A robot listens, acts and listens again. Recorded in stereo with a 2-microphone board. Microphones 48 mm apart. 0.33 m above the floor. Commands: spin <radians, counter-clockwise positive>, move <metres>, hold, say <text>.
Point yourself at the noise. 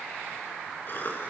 spin 0.79
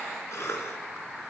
spin 1.57
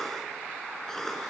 spin 0.17
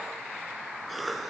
say Found it: a cough, straight ahead, over 4 m away.